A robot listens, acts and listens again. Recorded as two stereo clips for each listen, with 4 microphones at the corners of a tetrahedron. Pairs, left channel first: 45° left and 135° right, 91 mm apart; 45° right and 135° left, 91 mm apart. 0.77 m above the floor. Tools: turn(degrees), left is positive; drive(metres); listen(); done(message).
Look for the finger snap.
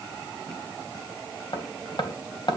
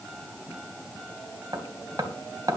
listen()
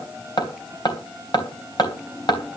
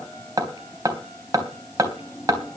listen()
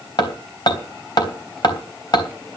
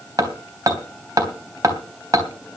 done("I can't make out a finger snap, only hammering.")